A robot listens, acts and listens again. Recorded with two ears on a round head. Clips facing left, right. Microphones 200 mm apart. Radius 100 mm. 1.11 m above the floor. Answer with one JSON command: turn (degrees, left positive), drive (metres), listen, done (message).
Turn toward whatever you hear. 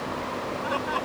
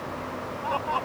{"turn": 25}
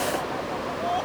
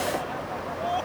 {"done": "Facing the laughter."}